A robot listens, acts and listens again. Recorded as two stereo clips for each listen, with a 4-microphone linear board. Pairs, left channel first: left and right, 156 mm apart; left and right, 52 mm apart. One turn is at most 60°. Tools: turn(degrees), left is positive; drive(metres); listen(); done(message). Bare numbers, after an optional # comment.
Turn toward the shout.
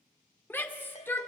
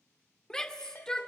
turn(30)
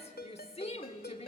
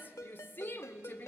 # So it is at 135° left.
turn(60)
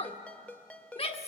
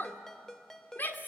# The shout is now 40° left.
turn(40)
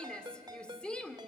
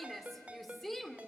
done("Facing the shout, 1 to 2 m away.")